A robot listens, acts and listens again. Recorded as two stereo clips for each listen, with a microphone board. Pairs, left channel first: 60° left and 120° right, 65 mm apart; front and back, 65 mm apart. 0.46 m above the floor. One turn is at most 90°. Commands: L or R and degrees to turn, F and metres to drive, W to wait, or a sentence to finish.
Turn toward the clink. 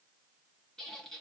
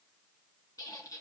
W
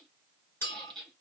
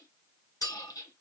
L10
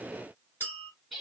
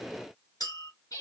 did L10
Facing the clink.